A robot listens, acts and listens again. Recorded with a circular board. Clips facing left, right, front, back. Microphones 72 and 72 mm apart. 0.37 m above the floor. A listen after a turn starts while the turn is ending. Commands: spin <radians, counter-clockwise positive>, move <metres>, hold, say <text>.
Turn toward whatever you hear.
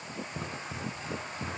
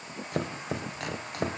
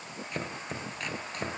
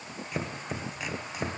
spin -1.66
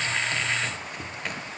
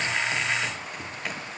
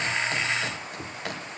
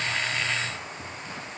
say Facing the chopping.